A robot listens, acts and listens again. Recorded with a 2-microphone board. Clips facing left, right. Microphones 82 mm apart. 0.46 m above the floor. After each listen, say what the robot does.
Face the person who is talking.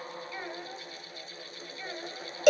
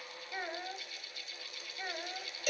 Turn 20° right.
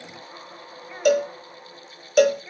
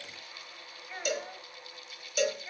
Facing the child speaking, 1 to 2 m away.